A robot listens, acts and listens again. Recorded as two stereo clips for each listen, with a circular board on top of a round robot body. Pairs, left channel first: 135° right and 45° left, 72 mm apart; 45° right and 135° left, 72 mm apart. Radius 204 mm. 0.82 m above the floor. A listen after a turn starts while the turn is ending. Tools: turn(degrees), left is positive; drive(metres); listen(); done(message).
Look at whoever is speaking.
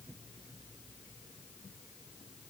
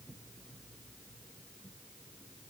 listen()
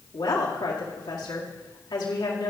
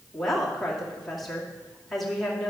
turn(degrees=-135)
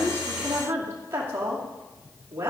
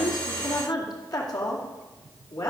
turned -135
turn(degrees=-15)
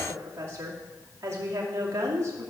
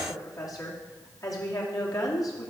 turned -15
done("Facing the woman speaking, 2 to 4 m away.")